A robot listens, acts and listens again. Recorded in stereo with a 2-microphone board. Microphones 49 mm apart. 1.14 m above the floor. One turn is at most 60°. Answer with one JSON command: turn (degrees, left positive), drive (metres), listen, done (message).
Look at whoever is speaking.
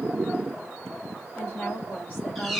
{"turn": 40}
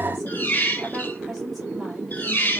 {"listen": true}
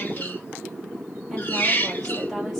{"listen": true}
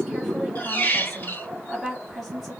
{"done": "Found it: a woman speaking, straight ahead, 2 to 4 m away."}